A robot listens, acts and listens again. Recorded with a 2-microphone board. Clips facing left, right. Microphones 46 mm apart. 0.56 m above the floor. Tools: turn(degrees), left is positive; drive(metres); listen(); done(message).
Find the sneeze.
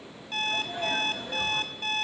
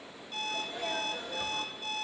turn(degrees=90)
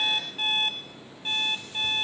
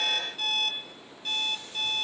done("I heard a sneeze from this way, but can't make it out now.")